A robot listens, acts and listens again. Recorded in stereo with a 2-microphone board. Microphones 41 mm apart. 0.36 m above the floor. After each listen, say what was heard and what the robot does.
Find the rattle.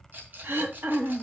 The rattle: about 50° right or 130° right. Turn 50° right.
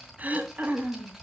Keep listening.
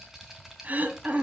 Facing the rattle, 2 to 4 m away.